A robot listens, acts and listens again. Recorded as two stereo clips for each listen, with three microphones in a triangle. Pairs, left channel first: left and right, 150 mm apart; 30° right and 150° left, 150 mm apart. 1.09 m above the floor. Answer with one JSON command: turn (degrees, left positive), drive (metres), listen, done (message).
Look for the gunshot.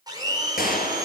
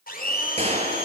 {"turn": 105}
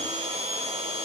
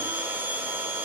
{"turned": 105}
{"done": "Facing where the gunshot came from. I can't hear it now."}